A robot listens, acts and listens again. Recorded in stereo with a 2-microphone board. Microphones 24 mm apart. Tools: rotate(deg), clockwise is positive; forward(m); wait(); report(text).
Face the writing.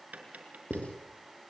rotate(-65)
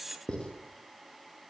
rotate(-45)
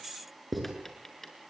report("Facing the writing.")